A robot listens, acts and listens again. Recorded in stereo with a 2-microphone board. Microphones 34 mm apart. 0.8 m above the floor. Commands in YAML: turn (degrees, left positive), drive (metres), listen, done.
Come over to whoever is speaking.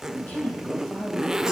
turn: 45
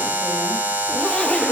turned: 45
listen: true
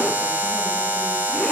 listen: true
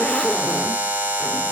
done: "I heard a woman speaking, but can't make it out now. It was about straight ahead or 90° left. I did not reach it."